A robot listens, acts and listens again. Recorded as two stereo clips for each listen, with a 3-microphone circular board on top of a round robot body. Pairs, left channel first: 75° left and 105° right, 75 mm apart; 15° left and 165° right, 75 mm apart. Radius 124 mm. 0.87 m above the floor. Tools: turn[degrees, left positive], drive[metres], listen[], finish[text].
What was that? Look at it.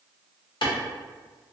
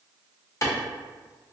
Thought: The clap: 65° left.
Action: turn[65]
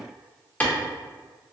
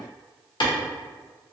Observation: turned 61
Action: finish[Found it: a clap, straight ahead, under 1 m away.]